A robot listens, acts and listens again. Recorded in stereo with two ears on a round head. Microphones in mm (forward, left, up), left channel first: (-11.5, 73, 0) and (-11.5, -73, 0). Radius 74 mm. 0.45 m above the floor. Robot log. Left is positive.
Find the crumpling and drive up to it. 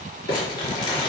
note: The crumpling: about 30° left or 150° left.
cmd yaw +30
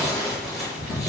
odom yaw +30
cmd fwd 1.0
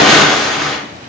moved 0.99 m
cmd fwd 1.0
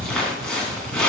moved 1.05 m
cmd fwd 1.0
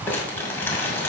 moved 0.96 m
cmd idle
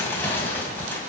cmd idle
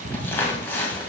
note: The crumpling is now 15° left.
cmd yaw +15
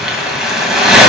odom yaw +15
cmd fwd 1.0
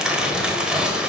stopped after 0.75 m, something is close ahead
cmd idle
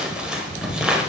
end: I am next to the crumpling.